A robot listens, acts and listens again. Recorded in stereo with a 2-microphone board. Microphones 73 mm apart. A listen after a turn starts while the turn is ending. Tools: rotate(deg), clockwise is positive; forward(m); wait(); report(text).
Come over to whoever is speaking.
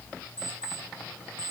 wait()
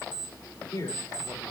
rotate(-50)
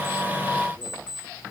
wait()
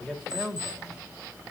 forward(1.0)
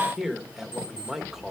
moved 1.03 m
forward(1.0)
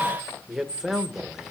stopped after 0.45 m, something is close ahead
report("Arrived at the man speaking, straight ahead.")